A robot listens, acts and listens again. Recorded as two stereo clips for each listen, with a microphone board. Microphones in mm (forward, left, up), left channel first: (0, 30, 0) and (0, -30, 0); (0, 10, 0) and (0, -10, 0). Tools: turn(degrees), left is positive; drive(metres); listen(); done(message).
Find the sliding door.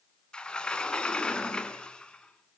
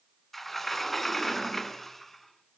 turn(degrees=15)
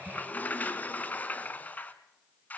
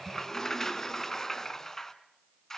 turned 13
turn(degrees=155)
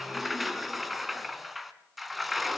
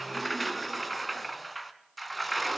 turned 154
done("Found it: a sliding door, straight ahead.")